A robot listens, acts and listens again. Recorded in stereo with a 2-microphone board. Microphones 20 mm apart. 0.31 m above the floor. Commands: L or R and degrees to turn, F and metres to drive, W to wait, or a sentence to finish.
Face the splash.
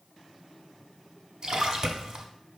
R40
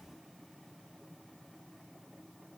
W
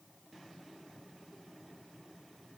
I heard a splash, but can't make it out now. It was about straight ahead or 100° right.